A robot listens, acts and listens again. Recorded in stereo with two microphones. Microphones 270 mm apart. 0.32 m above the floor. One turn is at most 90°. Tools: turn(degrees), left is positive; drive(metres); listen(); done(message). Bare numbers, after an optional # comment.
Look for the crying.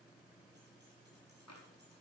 listen()
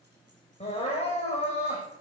# The crying: about 25° left or 155° left.
turn(25)
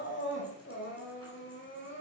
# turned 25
# So it is at 135° left.
turn(90)
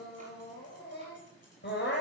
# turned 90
# The crying is now 40° left.
turn(40)
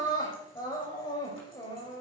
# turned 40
# The crying is now 15° left.
turn(15)
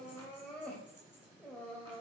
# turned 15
done("Facing the crying.")